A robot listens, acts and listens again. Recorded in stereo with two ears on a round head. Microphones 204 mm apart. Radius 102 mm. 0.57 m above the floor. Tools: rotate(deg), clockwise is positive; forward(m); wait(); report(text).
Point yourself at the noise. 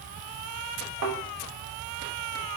rotate(70)
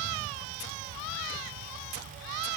wait()
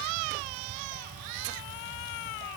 report("I heard a thud, but can't make it out now. It was about straight ahead or 40° right.")